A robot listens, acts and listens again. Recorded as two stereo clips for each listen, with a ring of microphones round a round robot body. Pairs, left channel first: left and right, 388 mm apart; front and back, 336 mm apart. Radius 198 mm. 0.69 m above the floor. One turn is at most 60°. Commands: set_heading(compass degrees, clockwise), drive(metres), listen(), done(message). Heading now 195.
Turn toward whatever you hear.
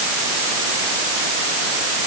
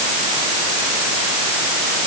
listen()
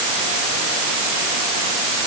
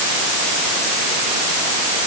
listen()
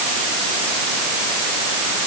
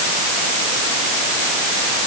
done("I can't make out anything.")